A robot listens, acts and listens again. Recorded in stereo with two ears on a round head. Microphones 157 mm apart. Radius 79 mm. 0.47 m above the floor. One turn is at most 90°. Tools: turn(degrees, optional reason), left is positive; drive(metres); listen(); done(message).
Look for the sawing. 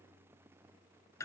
listen()
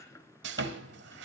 turn(degrees=-75, reason="The sawing: about 75° right or 105° right.")
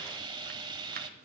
turn(degrees=-25, reason="So it is at 25° right.")
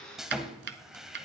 done("Facing the sawing.")